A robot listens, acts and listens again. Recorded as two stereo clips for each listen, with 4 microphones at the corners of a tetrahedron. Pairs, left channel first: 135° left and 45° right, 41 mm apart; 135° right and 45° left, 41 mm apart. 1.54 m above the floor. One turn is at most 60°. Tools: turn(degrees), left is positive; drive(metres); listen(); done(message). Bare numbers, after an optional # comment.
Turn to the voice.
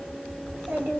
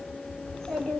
# The child speaking: 65° right.
turn(-60)
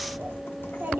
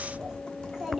# The child speaking is now 35° right.
turn(-35)
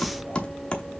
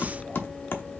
listen()
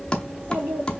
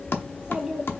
# The child speaking is now 30° right.
turn(-30)
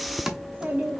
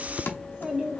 # The child speaking is now 15° right.
turn(-15)
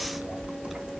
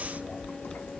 listen()
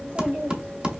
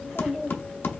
# The child speaking is now 20° right.
turn(-20)
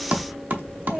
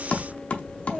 done("Found it: a child speaking, straight ahead.")